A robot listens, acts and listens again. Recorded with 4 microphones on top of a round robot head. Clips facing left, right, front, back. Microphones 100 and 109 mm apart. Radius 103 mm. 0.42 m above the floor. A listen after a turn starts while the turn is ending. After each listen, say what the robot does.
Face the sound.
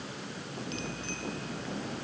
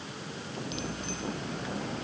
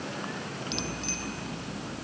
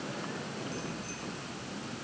Turn 15° right.
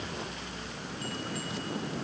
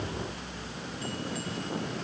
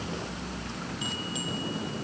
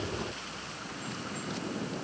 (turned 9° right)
Facing the bicycle bell.